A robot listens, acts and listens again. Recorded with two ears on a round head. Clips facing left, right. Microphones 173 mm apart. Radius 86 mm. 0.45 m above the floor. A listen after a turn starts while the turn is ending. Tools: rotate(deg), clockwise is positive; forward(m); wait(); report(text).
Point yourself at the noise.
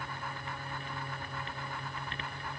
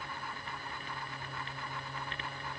wait()
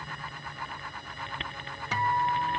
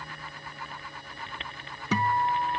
rotate(90)
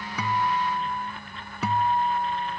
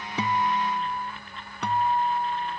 report("Found it: a guitar, straight ahead.")